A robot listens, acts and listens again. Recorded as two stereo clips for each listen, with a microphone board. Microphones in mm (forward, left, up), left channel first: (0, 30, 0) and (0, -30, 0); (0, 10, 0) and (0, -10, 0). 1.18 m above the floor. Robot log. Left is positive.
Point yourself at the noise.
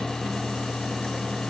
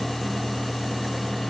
cmd idle
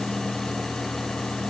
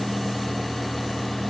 cmd idle
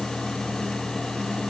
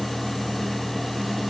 end: I can't make out anything to turn to.